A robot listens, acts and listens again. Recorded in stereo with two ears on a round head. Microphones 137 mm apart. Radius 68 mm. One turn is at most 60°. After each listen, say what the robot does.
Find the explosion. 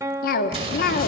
Turn 40° right.
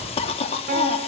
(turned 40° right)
Keep listening.
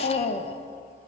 I heard an explosion, but can't make it out now. It was about straight ahead or 100° right.